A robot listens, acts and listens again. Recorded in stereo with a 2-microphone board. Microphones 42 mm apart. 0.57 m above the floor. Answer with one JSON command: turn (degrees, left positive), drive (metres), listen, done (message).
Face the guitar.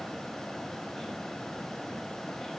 {"listen": true}
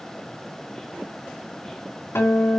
{"turn": 90}
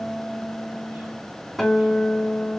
{"done": "Found it: a guitar, straight ahead, 2 to 4 m away."}